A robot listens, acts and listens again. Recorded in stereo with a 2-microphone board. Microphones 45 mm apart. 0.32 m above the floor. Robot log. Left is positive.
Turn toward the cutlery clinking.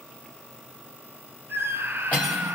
note: The cutlery clinking: about 35° left or 145° left.
cmd yaw +35
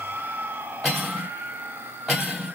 end: Found it: cutlery clinking, straight ahead.